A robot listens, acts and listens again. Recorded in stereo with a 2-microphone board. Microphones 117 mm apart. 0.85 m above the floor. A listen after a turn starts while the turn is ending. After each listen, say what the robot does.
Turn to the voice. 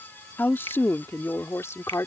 Turn 25° left.
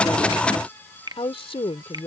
Turn 125° left.
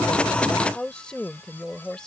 Found it: a woman speaking, straight ahead.